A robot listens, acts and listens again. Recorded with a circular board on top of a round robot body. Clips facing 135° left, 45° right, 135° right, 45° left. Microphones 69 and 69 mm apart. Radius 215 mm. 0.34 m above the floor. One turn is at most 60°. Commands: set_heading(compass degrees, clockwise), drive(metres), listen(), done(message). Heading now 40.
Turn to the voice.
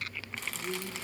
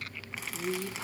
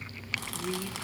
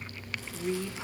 set_heading(70)
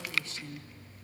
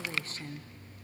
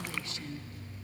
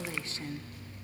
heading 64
done("Facing the woman speaking.")